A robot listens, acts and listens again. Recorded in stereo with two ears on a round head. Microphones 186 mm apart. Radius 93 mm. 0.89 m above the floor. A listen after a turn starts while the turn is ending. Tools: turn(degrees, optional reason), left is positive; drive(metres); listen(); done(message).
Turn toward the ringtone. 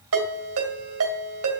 turn(degrees=-75, reason="The ringtone: about 75° right or 105° right.")
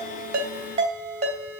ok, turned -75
turn(degrees=-30, reason="So it is at 30° right.")
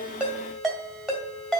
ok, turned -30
done("Facing the ringtone.")